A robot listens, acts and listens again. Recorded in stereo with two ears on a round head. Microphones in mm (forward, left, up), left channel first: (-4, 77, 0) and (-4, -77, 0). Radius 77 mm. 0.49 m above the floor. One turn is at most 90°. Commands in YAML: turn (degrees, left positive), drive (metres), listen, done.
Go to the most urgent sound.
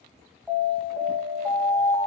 turn: 30
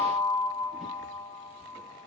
turn: 90
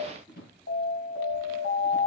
turn: 85
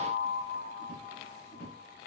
turn: 30
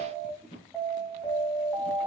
drive: 1.0
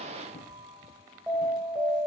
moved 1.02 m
drive: 1.0
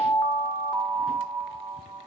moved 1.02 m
turn: -10
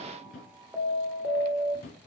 drive: 1.0
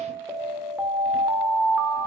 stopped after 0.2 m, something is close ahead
turn: -10
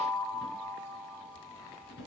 done: "I am next to the alarm."